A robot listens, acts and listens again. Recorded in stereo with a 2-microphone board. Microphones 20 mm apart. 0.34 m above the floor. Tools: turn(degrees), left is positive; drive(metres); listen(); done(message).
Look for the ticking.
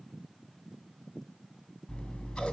listen()
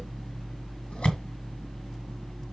listen()
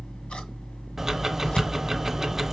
turn(degrees=-20)
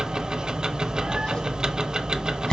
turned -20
turn(degrees=-140)
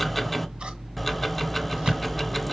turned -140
turn(degrees=10)
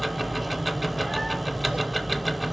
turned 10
done("Facing the ticking.")